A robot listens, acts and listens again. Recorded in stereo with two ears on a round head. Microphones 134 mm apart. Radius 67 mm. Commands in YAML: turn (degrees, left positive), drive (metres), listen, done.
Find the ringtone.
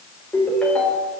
turn: 30
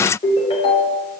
turn: 140
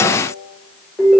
done: "Facing the ringtone, 2 to 4 m away."